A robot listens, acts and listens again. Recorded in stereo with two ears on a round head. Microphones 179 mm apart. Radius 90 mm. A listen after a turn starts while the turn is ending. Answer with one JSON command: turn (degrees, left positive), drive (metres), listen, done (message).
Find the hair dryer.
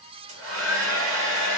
{"turn": -70}
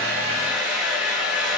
{"done": "Found it: a hair dryer, straight ahead, 1 to 2 m away."}